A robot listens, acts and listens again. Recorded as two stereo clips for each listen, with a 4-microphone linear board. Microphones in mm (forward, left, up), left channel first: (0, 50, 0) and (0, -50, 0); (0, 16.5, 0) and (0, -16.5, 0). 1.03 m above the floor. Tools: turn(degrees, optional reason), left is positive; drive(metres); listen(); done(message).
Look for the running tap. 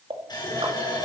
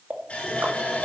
turn(degrees=45, reason="The running tap: about 45° left or 135° left.")
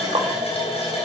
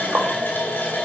turn(degrees=90, reason="So it is at 90° left.")
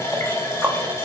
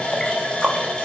turn(degrees=30, reason="The running tap is now 30° left.")
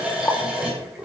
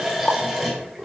turn(degrees=-10, reason="The running tap is now 10° right.")
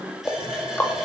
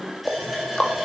done("Facing the running tap.")